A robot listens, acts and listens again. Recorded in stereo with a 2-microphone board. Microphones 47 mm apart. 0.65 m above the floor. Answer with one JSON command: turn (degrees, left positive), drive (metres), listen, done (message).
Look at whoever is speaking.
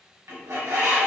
{"listen": true}
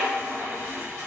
{"listen": true}
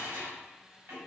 {"done": "I can't make out anyone speaking to turn to."}